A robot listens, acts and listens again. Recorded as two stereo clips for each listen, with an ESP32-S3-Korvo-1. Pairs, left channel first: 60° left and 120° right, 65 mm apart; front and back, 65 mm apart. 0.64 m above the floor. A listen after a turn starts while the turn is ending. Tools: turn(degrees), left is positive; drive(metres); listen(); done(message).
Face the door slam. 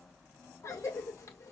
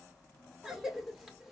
listen()
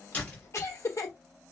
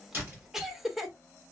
turn(degrees=130)
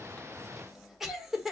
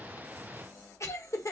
done("Facing where the door slam came from. I can't hear it now.")